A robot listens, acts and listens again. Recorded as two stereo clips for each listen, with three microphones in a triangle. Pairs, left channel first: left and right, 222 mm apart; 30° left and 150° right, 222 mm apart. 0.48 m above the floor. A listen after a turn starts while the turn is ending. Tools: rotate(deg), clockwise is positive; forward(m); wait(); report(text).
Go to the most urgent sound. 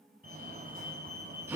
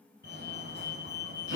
rotate(130)
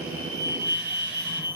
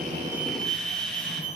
rotate(15)
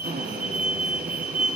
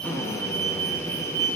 forward(1.0)
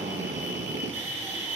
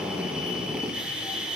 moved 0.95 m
rotate(10)
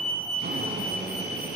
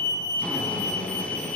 forward(1.0)
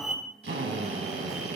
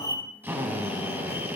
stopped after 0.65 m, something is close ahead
report("I am next to the fire alarm.")